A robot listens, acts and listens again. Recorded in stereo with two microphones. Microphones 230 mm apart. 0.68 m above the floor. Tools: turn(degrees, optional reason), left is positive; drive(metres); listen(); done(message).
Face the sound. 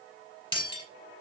turn(degrees=20, reason="The breaking glass: about 20° left or 160° left.")
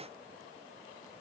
listen()
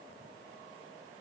done("I heard breaking glass, but can't make it out now. It was about straight ahead or 140° left.")